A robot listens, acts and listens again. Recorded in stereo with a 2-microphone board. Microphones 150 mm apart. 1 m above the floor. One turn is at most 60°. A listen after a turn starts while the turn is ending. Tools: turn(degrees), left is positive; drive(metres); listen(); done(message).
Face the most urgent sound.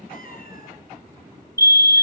turn(degrees=20)
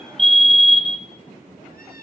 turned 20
done("Found it: a fire alarm, straight ahead.")